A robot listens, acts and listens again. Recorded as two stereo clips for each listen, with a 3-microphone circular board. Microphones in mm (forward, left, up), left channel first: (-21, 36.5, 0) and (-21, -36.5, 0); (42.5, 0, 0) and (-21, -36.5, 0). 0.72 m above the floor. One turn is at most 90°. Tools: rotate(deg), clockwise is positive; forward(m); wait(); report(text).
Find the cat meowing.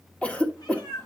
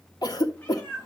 rotate(-90)
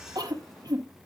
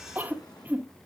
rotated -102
wait()
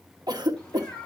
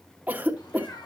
rotate(-20)
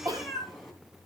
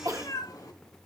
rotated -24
report("Found it: a cat meowing, straight ahead.")